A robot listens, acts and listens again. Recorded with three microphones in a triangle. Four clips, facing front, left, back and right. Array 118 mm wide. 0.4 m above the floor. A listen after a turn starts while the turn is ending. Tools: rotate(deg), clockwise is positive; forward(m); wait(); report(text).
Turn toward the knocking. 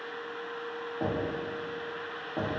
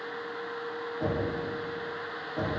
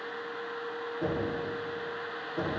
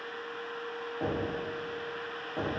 rotate(15)
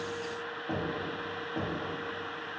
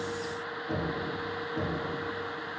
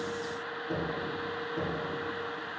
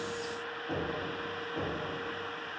report("Found it: knocking, straight ahead, 2 to 4 m away.")